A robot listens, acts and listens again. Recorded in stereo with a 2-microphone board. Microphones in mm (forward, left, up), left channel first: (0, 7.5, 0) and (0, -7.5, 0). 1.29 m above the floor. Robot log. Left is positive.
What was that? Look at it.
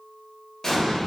note: The explosion: about 40° left or 140° left.
cmd yaw +40
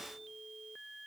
cmd idle
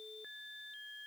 end: I heard an explosion, but can't make it out now. It was about straight ahead or 100° left.